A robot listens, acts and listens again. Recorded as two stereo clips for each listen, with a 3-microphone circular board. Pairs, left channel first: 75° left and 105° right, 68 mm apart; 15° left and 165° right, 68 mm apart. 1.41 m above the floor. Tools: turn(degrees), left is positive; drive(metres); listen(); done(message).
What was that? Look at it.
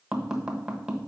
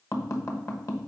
turn(degrees=-30)
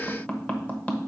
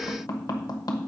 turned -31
done("Facing the tapping.")